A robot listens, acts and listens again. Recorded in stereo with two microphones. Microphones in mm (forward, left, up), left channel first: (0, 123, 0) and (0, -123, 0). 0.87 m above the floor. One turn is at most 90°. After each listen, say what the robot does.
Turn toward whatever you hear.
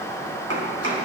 Turn 65° right.
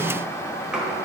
Found it: chopping, straight ahead, 2 to 4 m away.